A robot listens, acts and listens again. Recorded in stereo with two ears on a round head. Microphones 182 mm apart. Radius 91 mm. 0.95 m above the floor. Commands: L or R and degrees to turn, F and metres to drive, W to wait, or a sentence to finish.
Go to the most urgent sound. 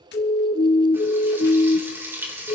L30
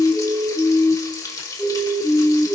F1.0
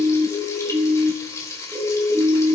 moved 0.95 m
F1.0
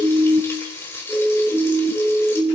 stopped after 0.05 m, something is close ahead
Arrived at the siren, straight ahead.